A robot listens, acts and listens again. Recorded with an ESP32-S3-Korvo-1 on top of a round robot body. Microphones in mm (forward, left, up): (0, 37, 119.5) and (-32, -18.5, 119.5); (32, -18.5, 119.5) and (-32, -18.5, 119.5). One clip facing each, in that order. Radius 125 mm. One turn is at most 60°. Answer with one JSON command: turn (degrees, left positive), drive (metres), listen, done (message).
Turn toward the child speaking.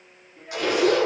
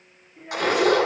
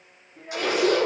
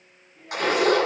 {"turn": -40}
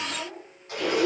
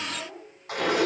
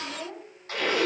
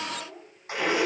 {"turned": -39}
{"turn": -10}
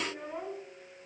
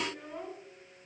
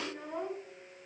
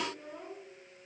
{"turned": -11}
{"done": "Found it: a child speaking, straight ahead."}